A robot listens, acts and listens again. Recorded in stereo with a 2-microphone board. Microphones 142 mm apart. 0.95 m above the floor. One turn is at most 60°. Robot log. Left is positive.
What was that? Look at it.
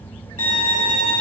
note: The violin: about 75° right or 105° right.
cmd yaw -60
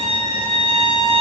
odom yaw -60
note: So it is at 45° right.
cmd yaw -45
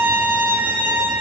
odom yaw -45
note: The violin is now 10° right.
cmd yaw -10
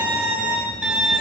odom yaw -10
end: Facing the violin, 2 to 4 m away.